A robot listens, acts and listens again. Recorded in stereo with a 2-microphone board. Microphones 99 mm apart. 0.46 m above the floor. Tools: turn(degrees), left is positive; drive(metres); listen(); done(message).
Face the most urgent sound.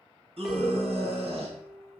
turn(degrees=-65)
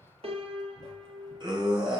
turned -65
turn(degrees=-45)
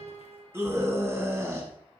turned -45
turn(degrees=-25)
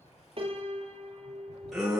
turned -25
done("Found it: a scream, straight ahead.")